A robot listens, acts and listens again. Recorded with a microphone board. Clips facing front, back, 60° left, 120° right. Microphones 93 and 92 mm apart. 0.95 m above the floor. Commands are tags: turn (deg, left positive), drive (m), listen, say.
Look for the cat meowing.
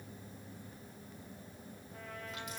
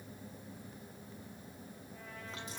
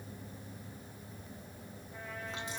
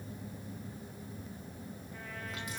<listen/>
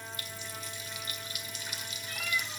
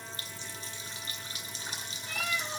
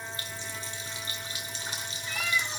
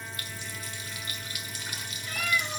<turn deg="-160"/>
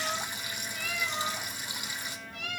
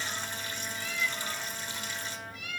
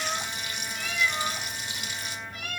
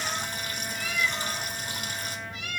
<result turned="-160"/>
<turn deg="15"/>
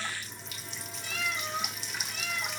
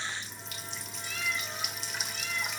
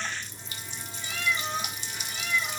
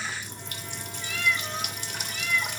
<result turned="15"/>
<say>Found it: a cat meowing, straight ahead, 2 to 4 m away.</say>